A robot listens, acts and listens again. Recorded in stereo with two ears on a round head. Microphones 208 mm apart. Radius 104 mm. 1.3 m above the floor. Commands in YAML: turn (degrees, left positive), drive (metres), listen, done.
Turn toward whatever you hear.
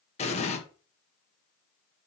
turn: 30
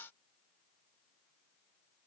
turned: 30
listen: true
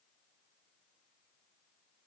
done: "I heard an explosion, but can't make it out now. It was about straight ahead or 120° left."